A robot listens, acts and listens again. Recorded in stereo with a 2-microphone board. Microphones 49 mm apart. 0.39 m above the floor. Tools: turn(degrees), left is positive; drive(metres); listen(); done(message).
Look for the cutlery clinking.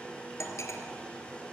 turn(degrees=70)
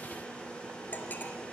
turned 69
turn(degrees=40)
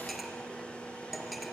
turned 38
done("Found it: cutlery clinking, straight ahead, 2 to 4 m away.")